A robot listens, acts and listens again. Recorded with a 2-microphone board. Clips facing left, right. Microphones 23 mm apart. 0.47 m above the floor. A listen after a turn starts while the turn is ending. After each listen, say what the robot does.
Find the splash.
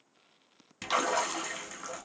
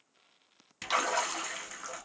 Turn 30° left.
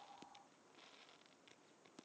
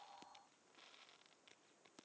Keep listening.
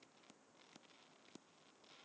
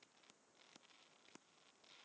I heard a splash, but can't make it out now. It was about 30° right or 150° left.